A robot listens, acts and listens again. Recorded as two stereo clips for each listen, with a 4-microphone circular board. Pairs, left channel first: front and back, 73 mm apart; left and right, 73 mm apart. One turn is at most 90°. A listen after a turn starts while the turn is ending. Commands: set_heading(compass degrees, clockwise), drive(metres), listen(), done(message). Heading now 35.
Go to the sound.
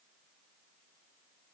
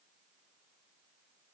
listen()
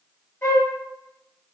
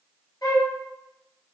set_heading(335)
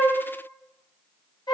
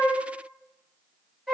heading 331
drive(1.0)
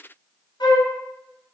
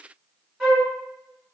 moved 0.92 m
set_heading(341)
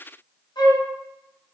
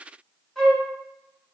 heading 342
drive(1.0)
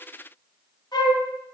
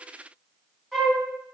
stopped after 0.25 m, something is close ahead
done("I am next to the flute.")